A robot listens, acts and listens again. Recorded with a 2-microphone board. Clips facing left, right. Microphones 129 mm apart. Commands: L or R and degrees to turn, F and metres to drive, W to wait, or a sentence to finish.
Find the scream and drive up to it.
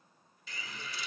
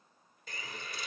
W
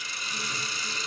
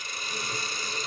W
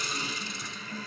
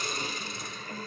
I can't make out a scream, only a hiss.